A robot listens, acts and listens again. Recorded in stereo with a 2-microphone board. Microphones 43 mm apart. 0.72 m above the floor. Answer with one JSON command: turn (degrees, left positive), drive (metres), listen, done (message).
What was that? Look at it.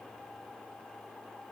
{"listen": true}
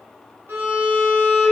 {"turn": -90}
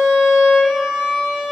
{"turn": -10}
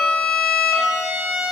{"done": "Found it: a violin, straight ahead."}